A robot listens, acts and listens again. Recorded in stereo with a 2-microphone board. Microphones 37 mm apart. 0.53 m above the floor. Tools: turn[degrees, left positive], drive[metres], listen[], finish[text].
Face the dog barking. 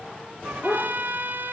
Action: turn[30]
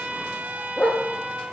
Thought: So it is at 160° left.
Action: turn[160]
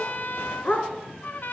Thought: The dog barking is now 40° left.
Action: turn[40]
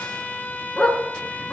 Thought: The dog barking is now 25° left.
Action: turn[25]
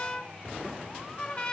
Action: listen[]
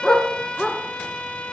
Thought: The dog barking is now 15° left.
Action: turn[15]
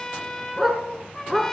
Action: finish[Found it: a dog barking, straight ahead, 1 to 2 m away.]